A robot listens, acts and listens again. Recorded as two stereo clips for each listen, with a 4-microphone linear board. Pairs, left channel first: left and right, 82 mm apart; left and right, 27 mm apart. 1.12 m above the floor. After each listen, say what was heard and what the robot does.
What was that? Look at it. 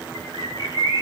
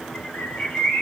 The bird: about 60° left or 120° left. Turn 60° left.
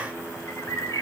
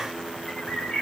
So it is at 45° left. Turn 45° left.
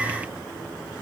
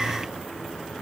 Keep listening.
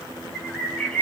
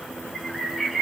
The bird is now 10° left. Turn 10° left.
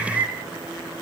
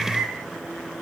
Found it: a bird, straight ahead, 1 to 2 m away.